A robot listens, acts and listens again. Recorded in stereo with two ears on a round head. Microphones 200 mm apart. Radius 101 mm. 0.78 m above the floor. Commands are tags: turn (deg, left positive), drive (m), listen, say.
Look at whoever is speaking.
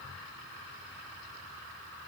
<listen/>
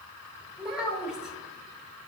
<turn deg="-30"/>
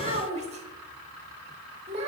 <turn deg="-145"/>
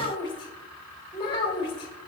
<turn deg="25"/>
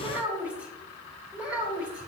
<say>Found it: a child speaking, straight ahead.</say>